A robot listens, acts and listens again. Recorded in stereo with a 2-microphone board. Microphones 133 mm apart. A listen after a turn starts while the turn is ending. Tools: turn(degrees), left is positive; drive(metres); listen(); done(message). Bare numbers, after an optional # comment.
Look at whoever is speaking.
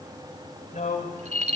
turn(90)
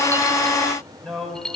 done("Found it: a man speaking, straight ahead.")